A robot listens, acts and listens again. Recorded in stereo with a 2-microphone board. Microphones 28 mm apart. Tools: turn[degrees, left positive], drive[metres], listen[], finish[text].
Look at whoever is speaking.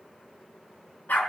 Action: listen[]
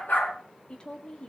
Thought: The woman speaking: about 40° left or 140° left.
Action: turn[40]
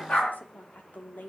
Thought: So it is at 100° left.
Action: turn[100]
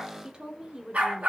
Thought: The woman speaking is now 30° right.
Action: turn[-30]
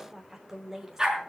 Thought: The woman speaking is now 10° right.
Action: turn[-10]
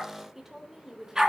Action: finish[Found it: a woman speaking, straight ahead, 2 to 4 m away.]